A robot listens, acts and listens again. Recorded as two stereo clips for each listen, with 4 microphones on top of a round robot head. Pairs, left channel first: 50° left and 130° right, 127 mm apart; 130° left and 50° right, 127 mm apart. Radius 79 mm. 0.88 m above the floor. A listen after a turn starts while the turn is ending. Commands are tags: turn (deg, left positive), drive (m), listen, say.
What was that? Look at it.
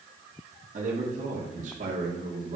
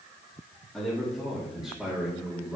<turn deg="-125"/>
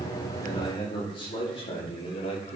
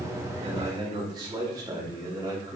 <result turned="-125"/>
<turn deg="15"/>
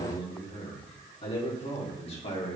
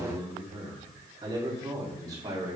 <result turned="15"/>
<turn deg="10"/>
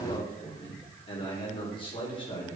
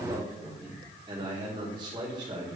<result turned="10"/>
<say>Facing the man speaking, 2 to 4 m away.</say>